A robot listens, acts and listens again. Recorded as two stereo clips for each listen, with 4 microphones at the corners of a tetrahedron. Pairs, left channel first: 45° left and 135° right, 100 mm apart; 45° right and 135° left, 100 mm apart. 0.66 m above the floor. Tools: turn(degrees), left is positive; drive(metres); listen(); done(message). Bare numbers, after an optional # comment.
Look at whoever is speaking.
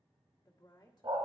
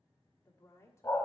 # The woman speaking: 10° left.
turn(10)
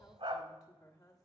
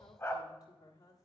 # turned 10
done("Facing the woman speaking.")